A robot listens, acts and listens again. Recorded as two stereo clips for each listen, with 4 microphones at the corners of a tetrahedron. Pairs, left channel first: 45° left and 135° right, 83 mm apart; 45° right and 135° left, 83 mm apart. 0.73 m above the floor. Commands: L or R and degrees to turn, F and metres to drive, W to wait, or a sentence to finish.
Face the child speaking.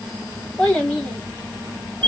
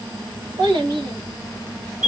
L125
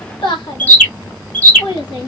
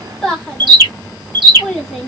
L35
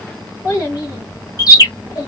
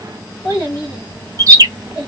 Found it: a child speaking, straight ahead, 1 to 2 m away.